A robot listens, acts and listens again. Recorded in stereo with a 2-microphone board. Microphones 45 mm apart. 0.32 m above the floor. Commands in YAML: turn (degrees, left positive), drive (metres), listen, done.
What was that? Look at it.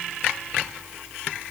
listen: true
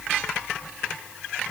listen: true
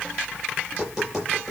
turn: -30
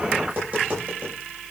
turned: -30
turn: -145
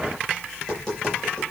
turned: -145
turn: 10
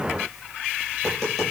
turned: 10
done: "Facing the tapping, over 4 m away."